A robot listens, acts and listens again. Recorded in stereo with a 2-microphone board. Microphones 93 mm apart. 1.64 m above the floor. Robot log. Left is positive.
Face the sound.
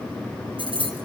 note: The keys jangling: about 65° right or 115° right.
cmd yaw -65
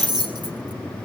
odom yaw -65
note: So it is at 50° right.
cmd yaw -50
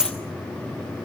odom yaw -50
note: The keys jangling is now 10° right.
cmd yaw -10
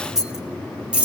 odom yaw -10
note: The keys jangling is now 15° right.
cmd yaw -15
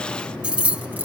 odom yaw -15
note: The keys jangling is now 15° right.
cmd yaw -15
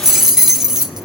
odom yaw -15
end: Found it: keys jangling, straight ahead, 1 to 2 m away.